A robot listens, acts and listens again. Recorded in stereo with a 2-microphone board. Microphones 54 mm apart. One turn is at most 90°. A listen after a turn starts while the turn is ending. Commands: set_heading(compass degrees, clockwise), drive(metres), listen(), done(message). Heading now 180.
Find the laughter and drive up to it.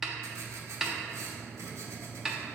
listen()
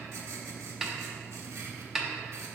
listen()
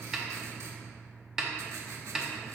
done("I can't make out laughter, only a snare drum and writing.")